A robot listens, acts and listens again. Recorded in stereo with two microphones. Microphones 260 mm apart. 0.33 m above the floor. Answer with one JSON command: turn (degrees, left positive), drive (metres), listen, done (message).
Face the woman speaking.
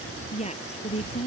{"turn": 25}
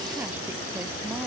{"listen": true}
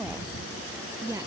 {"turn": -10}
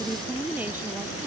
{"done": "Found it: a woman speaking, straight ahead."}